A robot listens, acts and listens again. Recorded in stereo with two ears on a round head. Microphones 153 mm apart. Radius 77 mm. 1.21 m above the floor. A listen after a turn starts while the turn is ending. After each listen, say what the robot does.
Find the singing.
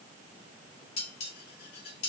Keep listening.
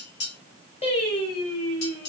Turn 40° left.
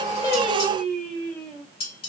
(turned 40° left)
Facing the singing, over 4 m away.